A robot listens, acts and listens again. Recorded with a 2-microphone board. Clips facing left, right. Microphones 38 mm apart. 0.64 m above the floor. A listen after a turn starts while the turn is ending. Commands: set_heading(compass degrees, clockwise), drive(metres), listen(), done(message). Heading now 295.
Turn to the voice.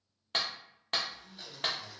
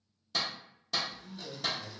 set_heading(345)
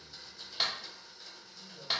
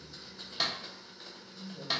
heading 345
set_heading(0)
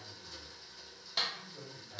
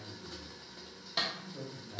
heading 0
done("Facing the man speaking.")